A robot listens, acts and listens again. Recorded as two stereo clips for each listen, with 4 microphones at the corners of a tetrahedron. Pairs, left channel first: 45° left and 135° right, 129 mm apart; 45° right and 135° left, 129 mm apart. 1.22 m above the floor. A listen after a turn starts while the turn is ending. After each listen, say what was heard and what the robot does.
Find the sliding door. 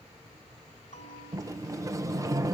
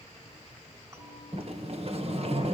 The sliding door: 165° left. Turn 165° left.
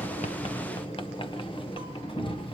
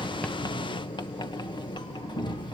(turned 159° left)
Found it: a sliding door, straight ahead, 1 to 2 m away.